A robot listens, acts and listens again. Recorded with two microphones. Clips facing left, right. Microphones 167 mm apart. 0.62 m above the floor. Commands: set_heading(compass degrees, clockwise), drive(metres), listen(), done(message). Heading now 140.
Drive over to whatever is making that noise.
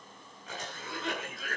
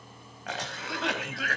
set_heading(230)
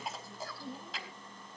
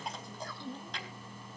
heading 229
drive(1.0)
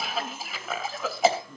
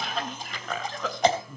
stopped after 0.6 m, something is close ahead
done("Something is in my way. I am facing the cough but have not reached it.")